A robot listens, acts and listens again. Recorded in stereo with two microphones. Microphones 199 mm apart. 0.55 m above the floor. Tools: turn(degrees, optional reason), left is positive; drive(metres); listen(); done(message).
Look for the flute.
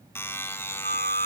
turn(degrees=-55, reason="The flute: about 55° right or 125° right.")
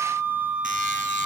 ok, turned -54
turn(degrees=-10, reason="So it is at 10° right.")
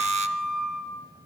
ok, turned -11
done("Facing the flute.")